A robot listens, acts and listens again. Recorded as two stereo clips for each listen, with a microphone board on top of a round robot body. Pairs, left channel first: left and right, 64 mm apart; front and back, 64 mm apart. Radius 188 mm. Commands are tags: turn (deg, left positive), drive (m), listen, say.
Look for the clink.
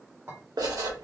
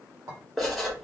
<turn deg="-145"/>
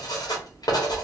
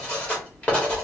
<listen/>
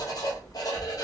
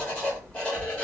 <listen/>
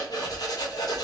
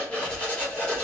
<say>I heard a clink from this way, but can't make it out now.</say>